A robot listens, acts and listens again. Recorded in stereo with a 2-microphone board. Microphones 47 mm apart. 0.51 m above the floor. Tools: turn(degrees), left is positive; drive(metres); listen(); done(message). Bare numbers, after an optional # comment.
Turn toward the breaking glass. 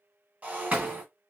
# The breaking glass: about 35° right or 145° right.
turn(-35)
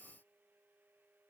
listen()
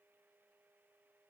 done("I heard breaking glass, but can't make it out now. It was about straight ahead or 110° right.")